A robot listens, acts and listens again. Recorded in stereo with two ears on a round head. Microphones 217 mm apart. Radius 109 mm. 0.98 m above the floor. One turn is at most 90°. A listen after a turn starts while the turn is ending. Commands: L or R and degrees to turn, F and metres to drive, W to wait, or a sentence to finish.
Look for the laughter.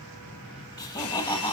L20
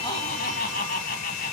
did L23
L90
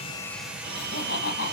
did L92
L45
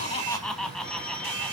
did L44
Facing the laughter.